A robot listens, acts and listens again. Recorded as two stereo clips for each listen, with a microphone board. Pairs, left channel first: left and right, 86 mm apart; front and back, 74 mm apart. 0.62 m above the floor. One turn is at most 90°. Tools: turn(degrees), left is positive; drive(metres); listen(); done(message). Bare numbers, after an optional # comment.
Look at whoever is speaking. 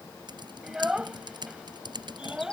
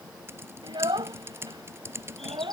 # The child speaking: 170° right.
turn(-90)
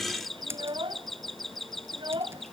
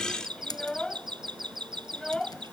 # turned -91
# The child speaking is now 80° right.
turn(-80)
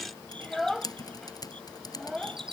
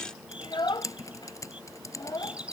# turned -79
done("Facing the child speaking.")